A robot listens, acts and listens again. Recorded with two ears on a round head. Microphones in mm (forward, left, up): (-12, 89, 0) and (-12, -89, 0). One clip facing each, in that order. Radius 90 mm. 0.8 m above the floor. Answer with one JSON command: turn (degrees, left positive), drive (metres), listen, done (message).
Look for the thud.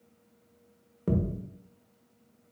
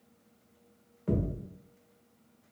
{"turn": 50}
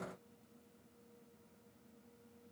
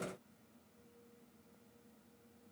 {"listen": true}
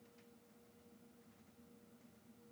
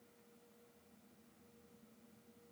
{"done": "I heard a thud, but can't make it out now. It was about straight ahead or 80° left."}